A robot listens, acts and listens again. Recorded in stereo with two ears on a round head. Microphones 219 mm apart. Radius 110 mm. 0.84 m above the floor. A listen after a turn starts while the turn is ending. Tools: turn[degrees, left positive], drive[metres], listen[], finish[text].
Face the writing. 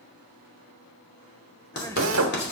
Thought: The writing: about 50° left or 130° left.
Action: turn[50]
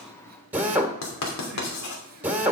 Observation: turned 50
Thought: So it is at 80° left.
Action: turn[80]
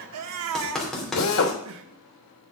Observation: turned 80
Action: finish[Facing the writing.]